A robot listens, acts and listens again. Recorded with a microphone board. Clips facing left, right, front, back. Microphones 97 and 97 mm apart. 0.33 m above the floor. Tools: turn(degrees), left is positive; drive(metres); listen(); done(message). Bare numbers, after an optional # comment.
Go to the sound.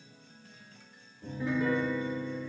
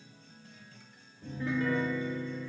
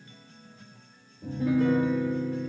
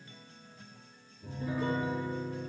drive(1.0)
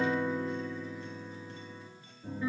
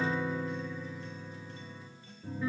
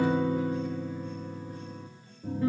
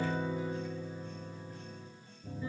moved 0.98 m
drive(1.0)
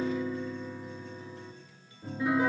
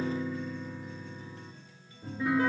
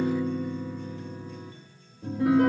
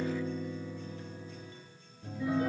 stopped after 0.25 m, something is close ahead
done("Something is in my way. I am facing the piano but have not reached it.")